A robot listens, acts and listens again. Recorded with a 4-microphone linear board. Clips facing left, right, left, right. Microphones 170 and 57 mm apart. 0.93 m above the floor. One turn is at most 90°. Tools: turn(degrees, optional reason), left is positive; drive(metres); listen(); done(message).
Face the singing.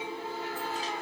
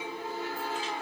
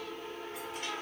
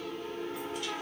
listen()
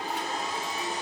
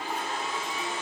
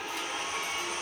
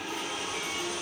listen()
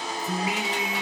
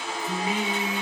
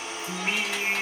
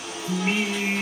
turn(degrees=30)
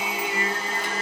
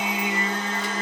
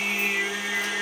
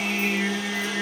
turn(degrees=90, reason="So it is at 140° left.")
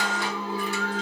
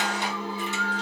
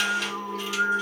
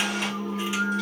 turn(degrees=65, reason="The singing is now 65° left.")
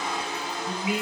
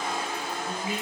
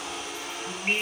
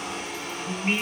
done("Found it: singing, straight ahead.")